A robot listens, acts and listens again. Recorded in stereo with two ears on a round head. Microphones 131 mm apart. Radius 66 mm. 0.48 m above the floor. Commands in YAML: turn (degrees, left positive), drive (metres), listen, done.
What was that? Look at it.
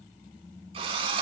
turn: -40
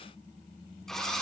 done: "Facing the drill."